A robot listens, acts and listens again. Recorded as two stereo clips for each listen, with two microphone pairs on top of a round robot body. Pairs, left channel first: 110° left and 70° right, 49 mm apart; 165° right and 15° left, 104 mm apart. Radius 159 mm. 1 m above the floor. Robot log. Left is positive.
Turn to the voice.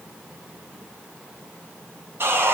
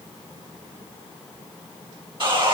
cmd idle
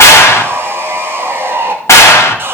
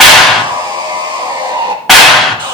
cmd idle
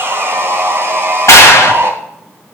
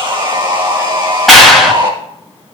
end: I can't make out anyone speaking to turn to.